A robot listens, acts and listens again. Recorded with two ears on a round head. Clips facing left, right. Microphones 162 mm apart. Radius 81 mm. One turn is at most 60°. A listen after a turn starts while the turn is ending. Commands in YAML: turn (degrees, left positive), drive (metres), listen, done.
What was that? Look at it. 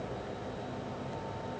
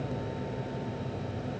listen: true
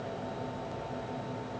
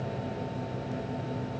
listen: true
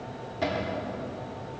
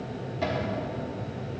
turn: 30
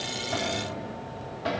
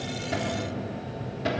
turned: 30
turn: -30
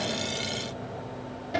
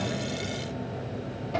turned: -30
turn: 10
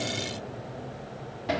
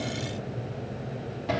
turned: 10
done: "Facing the cupboard door."